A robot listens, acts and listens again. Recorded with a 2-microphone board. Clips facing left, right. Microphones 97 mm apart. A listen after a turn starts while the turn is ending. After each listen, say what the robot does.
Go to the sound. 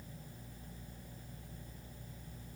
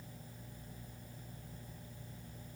Keep listening.
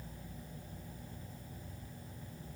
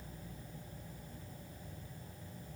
Keep listening.
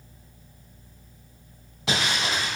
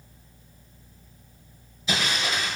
Turn 90° left.
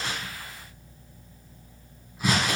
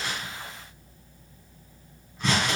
Drive 1.0 m forward.
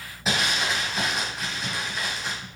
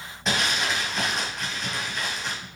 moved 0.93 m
Drive 1.0 m forward.
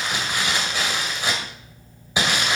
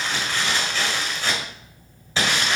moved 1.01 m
Turn 15° left.
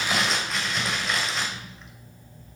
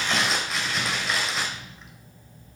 Drive 1.0 m forward.
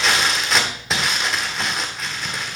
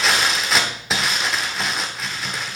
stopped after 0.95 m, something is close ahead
Arrived at the crumpling, straight ahead.